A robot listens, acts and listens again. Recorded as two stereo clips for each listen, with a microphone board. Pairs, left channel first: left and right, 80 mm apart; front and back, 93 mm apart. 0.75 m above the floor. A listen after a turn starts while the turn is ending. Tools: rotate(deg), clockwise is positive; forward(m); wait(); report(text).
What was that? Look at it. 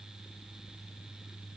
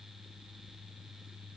wait()
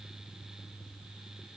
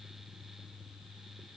wait()
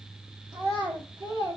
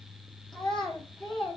rotate(80)
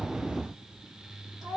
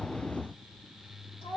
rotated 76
report("Facing the child speaking, 1 to 2 m away.")